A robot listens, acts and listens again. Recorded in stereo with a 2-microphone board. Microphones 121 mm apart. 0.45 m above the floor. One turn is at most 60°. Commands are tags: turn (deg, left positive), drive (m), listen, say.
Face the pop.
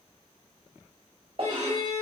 <turn deg="-60"/>
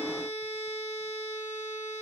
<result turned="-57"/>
<listen/>
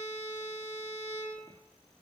<say>I heard a pop, but can't make it out now. It was about 5° right or 60° right.</say>